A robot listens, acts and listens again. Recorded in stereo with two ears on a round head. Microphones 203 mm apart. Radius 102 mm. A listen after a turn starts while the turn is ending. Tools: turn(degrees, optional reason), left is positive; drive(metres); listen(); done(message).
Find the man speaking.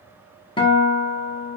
listen()
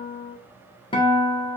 listen()
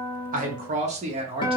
turn(degrees=-25, reason="The man speaking: about 25° right or 155° right.")
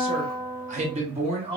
turn(degrees=-25, reason="The man speaking: about 25° right or 155° right.")
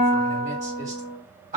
turn(degrees=-30, reason="The man speaking: about 30° right or 150° right.")
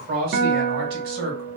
turn(degrees=-125, reason="So it is at 125° right.")
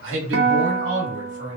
turn(degrees=-35, reason="The man speaking is now 35° right.")
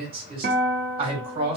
turn(degrees=-25, reason="The man speaking is now 25° right.")
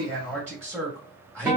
done("Facing the man speaking.")